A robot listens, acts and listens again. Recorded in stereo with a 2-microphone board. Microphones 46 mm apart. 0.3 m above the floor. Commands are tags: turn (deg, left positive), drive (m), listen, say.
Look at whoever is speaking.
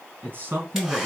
<turn deg="-45"/>
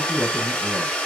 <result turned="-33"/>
<turn deg="-20"/>
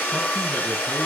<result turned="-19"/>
<listen/>
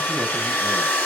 <listen/>
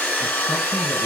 <say>Facing where the man speaking came from. I can't hear it now.</say>